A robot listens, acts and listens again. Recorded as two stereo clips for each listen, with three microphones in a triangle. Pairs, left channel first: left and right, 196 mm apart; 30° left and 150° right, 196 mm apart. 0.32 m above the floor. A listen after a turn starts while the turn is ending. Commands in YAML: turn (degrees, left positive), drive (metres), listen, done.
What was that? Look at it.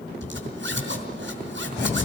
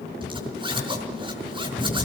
turn: -85
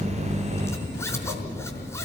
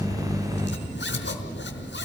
turn: 15
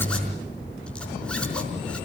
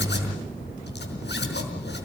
listen: true
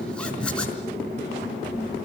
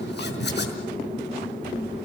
done: "Facing the zipper, over 4 m away."